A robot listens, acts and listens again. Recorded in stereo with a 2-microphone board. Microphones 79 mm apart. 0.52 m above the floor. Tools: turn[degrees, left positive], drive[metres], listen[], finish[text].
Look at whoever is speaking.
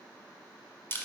Action: listen[]
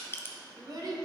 Thought: The child speaking: about 55° right or 125° right.
Action: turn[-55]
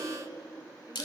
Thought: So it is at 45° right.
Action: turn[-45]
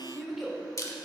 Action: finish[Found it: a child speaking, straight ahead, 1 to 2 m away.]